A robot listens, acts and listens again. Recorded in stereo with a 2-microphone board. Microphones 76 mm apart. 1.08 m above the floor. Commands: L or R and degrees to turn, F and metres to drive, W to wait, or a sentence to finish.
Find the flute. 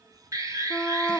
L30
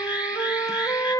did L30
L150
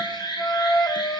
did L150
L30
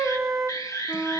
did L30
Found it: a flute, straight ahead.